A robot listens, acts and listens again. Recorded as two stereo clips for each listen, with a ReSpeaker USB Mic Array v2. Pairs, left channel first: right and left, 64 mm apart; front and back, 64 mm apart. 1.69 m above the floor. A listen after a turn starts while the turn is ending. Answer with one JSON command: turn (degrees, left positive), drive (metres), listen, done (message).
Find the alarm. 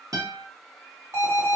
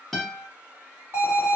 {"turn": 135}
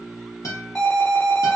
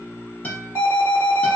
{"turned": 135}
{"turn": -20}
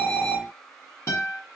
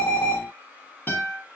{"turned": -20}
{"done": "Found it: an alarm, straight ahead, 1 to 2 m away."}